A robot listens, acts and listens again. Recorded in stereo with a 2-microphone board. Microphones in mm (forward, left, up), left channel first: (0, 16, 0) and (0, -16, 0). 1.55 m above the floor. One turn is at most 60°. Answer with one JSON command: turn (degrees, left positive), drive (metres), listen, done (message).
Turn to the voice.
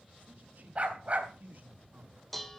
{"turn": -60}
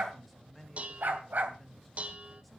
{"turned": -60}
{"done": "Facing the man speaking."}